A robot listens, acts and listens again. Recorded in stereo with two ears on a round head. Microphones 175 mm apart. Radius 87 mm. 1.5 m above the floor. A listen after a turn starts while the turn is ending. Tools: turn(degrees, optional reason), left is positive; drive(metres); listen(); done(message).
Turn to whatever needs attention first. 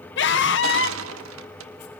turn(degrees=65, reason="The scream: about 65° left or 115° left.")
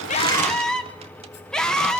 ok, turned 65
done("Found it: a scream, straight ahead, 1 to 2 m away.")